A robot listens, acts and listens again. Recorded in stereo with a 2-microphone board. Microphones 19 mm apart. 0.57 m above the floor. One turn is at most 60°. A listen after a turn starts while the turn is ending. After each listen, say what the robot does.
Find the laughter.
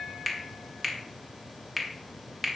Keep listening.
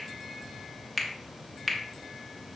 Keep listening.
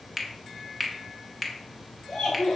Turn 50° left.
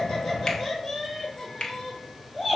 Facing the laughter.